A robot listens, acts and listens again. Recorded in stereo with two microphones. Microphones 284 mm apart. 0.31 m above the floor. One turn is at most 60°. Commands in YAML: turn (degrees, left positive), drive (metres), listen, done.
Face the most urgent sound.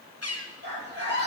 turn: -35
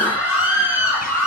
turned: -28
turn: -60
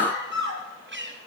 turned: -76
turn: -40
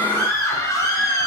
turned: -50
turn: 10
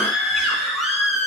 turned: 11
done: "Facing the scream."